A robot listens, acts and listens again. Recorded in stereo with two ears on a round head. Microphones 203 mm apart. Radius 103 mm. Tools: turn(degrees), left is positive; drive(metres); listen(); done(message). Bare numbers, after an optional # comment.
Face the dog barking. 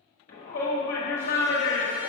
listen()
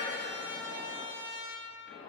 listen()
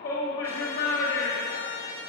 done("I can't make out a dog barking to turn to.")